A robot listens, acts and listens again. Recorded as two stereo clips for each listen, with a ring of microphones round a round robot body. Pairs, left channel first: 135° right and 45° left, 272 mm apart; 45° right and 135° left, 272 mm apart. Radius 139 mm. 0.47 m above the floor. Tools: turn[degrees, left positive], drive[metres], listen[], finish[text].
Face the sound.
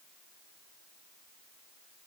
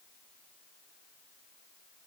Action: listen[]
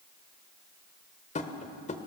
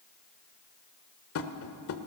Thought: The tapping: 75° right.
Action: turn[-75]
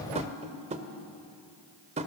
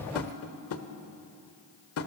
Thought: The tapping is now 20° right.
Action: turn[-20]
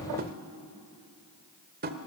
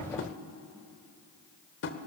Action: finish[Facing the tapping, 1 to 2 m away.]